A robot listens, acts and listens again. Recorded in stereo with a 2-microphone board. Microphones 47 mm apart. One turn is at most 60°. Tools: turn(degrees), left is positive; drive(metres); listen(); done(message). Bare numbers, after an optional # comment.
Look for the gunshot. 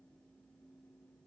listen()
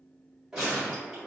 turn(-30)
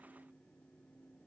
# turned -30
listen()
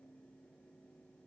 done("I heard a gunshot, but can't make it out now. It was about 15° left or 135° right.")